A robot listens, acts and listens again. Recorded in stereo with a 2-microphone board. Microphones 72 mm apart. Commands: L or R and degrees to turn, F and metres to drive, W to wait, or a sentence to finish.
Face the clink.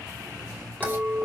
L30
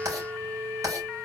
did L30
R20
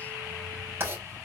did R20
W
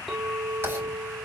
Found it: a clink, straight ahead, 1 to 2 m away.